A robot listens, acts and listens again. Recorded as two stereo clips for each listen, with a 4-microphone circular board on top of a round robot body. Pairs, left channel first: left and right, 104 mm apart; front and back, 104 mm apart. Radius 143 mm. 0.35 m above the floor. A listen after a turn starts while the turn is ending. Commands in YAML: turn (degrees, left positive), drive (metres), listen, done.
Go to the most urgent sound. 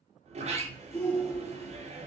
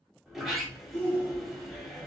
turn: 20
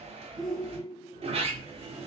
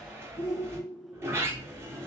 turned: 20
drive: 1.0
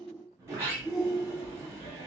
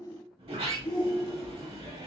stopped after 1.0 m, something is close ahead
done: "Arrived at the shout, straight ahead."